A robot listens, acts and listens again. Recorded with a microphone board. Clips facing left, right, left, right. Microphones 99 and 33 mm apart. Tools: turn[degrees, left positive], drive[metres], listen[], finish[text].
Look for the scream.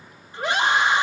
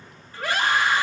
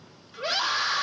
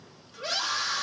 Thought: The scream: about 20° left or 160° left.
Action: turn[20]
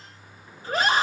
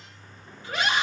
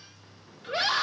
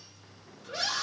Thought: So it is at 135° left.
Action: turn[135]
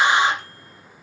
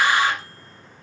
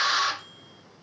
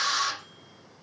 Thought: The scream is now 25° left.
Action: turn[25]
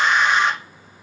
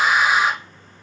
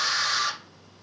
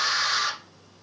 Action: finish[Facing the scream.]